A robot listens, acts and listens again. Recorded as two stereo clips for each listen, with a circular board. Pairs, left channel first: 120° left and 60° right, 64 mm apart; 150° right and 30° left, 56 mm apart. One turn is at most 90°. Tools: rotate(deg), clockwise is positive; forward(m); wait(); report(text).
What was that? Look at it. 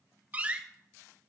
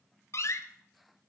rotate(90)
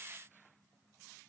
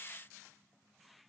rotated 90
rotate(35)
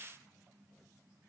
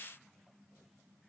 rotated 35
report("Facing where the door slam came from. I can't hear it now.")